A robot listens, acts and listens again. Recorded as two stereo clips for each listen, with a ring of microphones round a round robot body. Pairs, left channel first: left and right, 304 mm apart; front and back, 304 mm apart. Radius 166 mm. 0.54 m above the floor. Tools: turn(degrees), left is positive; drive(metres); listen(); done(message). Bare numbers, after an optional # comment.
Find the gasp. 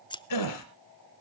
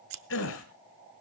# The gasp: 55° left.
turn(55)
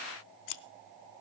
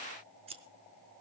done("Facing where the gasp came from. I can't hear it now.")